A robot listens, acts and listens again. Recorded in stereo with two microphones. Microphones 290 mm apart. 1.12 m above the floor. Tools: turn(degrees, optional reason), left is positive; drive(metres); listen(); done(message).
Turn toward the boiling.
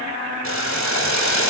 turn(degrees=70, reason="The boiling: about 70° left or 110° left.")
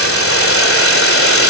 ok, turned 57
turn(degrees=50, reason="So it is at 50° left.")
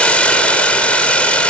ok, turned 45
done("Found it: boiling, straight ahead.")